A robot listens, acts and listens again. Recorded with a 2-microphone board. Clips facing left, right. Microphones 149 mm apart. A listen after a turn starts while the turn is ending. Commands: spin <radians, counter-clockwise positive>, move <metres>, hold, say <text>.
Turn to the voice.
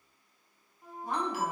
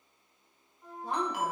spin -0.52
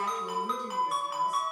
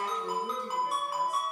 spin -2.01
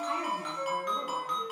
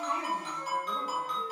hold
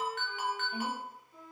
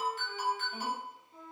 spin 0.17
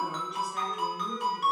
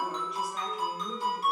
say Facing the woman speaking, 1 to 2 m away.